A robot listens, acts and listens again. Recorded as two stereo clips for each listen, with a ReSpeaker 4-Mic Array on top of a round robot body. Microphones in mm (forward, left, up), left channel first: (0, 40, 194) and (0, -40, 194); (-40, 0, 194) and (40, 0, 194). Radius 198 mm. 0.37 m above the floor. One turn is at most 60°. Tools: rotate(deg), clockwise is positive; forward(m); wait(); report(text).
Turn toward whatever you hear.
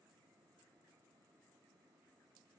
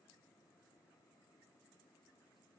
wait()
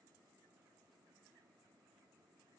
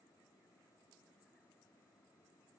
wait()
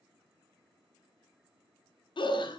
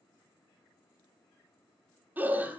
rotate(-60)
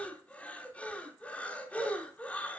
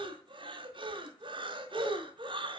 rotate(-15)
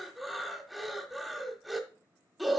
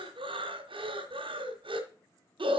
report("Facing the breathing, 1 to 2 m away.")